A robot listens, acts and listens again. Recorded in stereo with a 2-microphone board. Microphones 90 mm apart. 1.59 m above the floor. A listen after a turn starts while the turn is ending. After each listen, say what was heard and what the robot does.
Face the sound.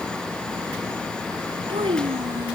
Turn 90° right.
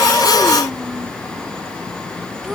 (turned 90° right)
Facing the child speaking.